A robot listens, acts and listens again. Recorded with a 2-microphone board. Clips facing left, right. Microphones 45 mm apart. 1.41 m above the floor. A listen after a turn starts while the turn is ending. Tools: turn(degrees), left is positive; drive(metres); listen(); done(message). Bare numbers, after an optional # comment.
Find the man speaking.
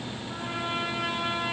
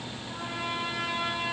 listen()
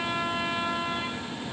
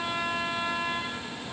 listen()
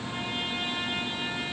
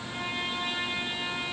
done("I can't make out a man speaking, only a trumpet.")